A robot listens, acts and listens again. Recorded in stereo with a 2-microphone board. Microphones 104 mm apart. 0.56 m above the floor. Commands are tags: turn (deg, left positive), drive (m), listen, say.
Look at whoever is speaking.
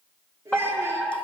<turn deg="-25"/>
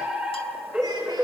<listen/>
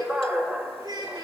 <turn deg="-135"/>
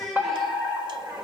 <say>Facing the child speaking.</say>